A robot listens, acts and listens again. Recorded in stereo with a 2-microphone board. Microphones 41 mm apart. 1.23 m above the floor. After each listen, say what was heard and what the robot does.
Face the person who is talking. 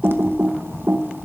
Keep listening.
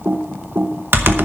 Keep listening.
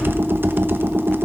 I can't make out anyone speaking, only typing on a keyboard.